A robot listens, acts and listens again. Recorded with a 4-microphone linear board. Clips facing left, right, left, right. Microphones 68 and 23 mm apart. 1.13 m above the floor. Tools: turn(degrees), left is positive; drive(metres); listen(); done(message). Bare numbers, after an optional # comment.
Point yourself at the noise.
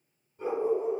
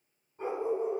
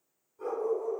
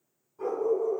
# The dog barking: about 25° right or 155° right.
turn(-25)
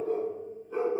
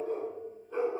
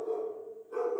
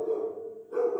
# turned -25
# So it is at 15° left.
turn(15)
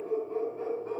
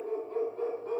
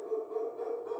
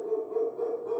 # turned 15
# The dog barking is now 15° left.
turn(15)
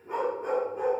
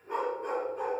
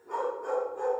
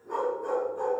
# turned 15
# The dog barking is now 15° left.
turn(15)
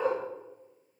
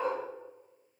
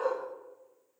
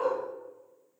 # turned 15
done("Found it: a dog barking, straight ahead, 1 to 2 m away.")